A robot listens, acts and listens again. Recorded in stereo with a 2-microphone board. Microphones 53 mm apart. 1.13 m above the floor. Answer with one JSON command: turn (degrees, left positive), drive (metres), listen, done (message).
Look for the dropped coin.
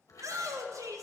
{"listen": true}
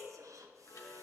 {"listen": true}
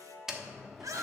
{"turn": -30}
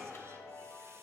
{"listen": true}
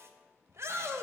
{"done": "I heard a dropped coin, but can't make it out now. It was about 20° left or 140° right."}